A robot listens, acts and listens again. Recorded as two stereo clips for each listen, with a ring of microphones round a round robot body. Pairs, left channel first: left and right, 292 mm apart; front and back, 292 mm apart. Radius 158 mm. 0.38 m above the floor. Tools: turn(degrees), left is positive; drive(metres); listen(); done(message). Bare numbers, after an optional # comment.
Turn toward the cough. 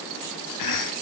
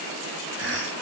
# The cough: 125° left.
turn(125)
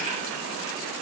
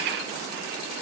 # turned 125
listen()
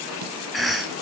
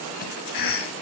done("Found it: a cough, straight ahead.")